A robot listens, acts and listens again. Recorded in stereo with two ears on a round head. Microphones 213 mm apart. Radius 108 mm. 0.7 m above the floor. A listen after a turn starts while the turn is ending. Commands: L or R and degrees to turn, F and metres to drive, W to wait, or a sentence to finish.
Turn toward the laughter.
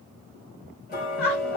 L60
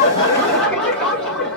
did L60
Found it: laughter, straight ahead.